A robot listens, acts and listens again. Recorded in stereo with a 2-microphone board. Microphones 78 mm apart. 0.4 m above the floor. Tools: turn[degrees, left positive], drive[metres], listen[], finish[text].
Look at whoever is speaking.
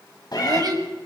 Thought: The child speaking: about 55° right or 125° right.
Action: turn[-55]
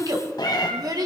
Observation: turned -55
Thought: So it is at 55° right.
Action: turn[-55]
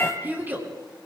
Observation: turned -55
Thought: The child speaking is now 25° right.
Action: turn[-25]
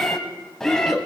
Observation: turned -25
Action: finish[Found it: a child speaking, straight ahead, over 4 m away.]